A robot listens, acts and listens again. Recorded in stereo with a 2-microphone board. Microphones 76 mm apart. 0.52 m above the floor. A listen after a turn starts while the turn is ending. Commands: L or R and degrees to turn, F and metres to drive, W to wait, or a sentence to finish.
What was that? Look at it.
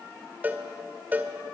R25
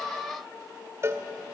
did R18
R140
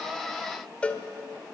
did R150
L20
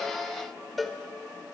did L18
Found it: a cowbell, straight ahead, 1 to 2 m away.